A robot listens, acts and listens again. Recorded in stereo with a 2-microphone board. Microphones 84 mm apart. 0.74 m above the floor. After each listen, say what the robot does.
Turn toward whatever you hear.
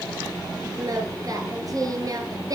Turn 45° right.
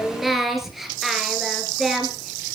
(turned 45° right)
Facing the singing, 2 to 4 m away.